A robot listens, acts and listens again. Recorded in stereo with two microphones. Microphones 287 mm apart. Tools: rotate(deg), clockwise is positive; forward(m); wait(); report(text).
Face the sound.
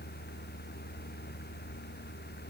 wait()
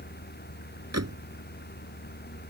rotate(60)
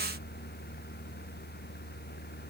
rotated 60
wait()
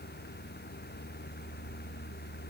report("I heard a door slam, but can't make it out now. It was about straight ahead or 60° right.")